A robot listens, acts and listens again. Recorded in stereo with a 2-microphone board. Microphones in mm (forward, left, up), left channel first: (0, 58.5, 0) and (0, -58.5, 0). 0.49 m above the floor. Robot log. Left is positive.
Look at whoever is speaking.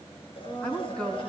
cmd yaw +30
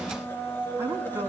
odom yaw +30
note: So it is at 20° right.
cmd yaw -20
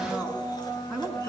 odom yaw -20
end: Facing the woman speaking, over 4 m away.